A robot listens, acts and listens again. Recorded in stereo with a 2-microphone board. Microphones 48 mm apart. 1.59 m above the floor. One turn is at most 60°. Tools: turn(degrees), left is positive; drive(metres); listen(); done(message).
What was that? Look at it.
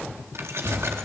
turn(degrees=-60)
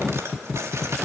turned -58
turn(degrees=-60)
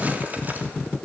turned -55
turn(degrees=-35)
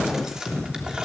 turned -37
turn(degrees=-15)
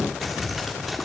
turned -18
done("Found it: keys jangling, straight ahead.")